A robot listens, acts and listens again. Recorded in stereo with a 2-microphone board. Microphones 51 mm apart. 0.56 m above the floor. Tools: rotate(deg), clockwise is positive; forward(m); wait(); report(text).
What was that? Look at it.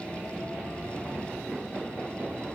wait()
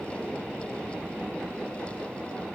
wait()
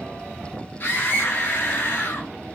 rotate(-40)
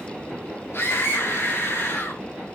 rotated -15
rotate(-125)
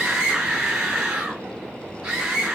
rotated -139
rotate(15)
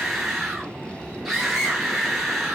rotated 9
report("Facing the scream, over 4 m away.")